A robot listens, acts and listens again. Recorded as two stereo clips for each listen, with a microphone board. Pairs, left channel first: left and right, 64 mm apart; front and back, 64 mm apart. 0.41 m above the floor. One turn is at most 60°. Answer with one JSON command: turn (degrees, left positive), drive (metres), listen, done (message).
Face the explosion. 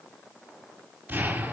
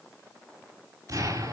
{"turn": -60}
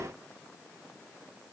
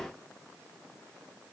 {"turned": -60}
{"turn": -60}
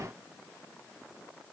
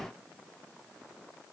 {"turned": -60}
{"turn": -30}
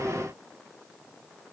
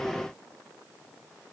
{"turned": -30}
{"done": "I heard an explosion from this way, but can't make it out now."}